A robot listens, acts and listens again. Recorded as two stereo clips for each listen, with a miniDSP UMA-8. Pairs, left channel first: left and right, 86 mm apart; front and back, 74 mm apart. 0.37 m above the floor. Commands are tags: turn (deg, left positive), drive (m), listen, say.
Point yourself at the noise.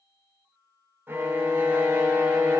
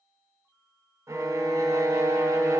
<turn deg="-140"/>
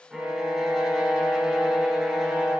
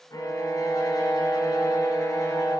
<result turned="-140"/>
<say>Facing the violin.</say>